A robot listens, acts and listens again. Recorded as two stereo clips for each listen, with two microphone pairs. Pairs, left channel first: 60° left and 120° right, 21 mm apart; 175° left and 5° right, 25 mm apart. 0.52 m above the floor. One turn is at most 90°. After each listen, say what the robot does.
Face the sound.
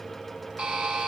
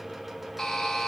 Turn 90° right.
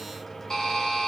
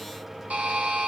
Found it: a buzzer, straight ahead.